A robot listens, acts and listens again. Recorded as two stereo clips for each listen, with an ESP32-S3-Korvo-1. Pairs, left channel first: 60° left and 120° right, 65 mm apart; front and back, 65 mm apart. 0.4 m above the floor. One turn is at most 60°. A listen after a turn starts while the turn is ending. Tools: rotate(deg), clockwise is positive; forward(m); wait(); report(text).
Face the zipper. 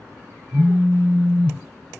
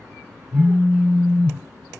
wait()
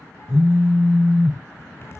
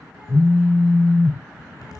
rotate(-15)
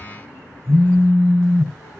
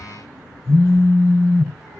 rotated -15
wait()
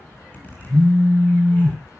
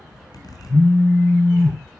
report("Found it: a zipper, straight ahead.")